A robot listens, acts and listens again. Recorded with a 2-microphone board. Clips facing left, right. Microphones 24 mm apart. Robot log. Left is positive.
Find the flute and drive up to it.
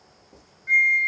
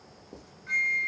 note: The flute: about 55° right or 125° right.
cmd yaw -55
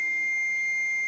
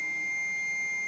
note: So it is at 10° right.
cmd yaw -10
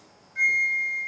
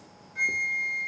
cmd fwd 1.0
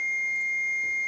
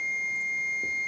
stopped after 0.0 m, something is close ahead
end: Blocked. The flute is further on, straight ahead.